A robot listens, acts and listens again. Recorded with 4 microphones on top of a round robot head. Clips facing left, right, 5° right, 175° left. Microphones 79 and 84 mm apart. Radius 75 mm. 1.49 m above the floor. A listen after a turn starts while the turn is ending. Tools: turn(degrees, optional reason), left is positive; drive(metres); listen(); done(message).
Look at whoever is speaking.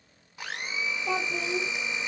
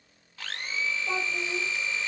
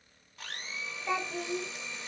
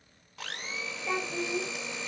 turn(degrees=80, reason="The child speaking: 80° left.")
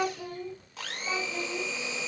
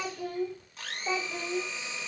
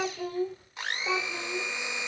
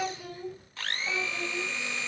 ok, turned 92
turn(degrees=-25, reason="The child speaking is now 25° right.")
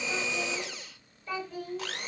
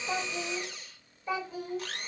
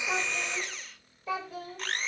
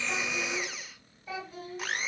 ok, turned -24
turn(degrees=-15, reason="The child speaking is now 15° right.")
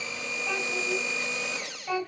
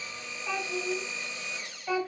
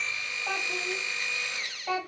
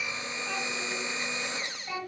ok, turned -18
done("Found it: a child speaking, straight ahead.")